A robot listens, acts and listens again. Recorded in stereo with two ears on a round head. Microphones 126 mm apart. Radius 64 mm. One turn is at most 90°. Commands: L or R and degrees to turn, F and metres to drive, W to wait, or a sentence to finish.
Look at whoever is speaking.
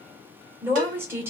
R20
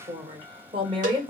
R90
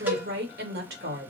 R80
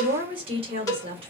R40
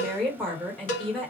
Found it: a woman speaking, straight ahead, 1 to 2 m away.